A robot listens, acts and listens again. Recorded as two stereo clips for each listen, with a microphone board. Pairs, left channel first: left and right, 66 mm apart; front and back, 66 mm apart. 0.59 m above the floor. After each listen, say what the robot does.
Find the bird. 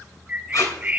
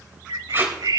Turn 155° right.
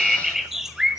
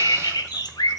Found it: a bird, straight ahead, under 1 m away.